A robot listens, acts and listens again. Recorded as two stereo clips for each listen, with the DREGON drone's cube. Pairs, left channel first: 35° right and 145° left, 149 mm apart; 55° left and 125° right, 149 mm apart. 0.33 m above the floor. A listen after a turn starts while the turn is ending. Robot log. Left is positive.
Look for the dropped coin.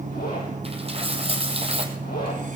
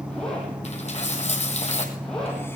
note: The dropped coin: 95° left.
cmd yaw +95
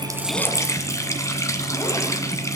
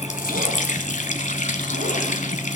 end: I heard a dropped coin from this way, but can't make it out now.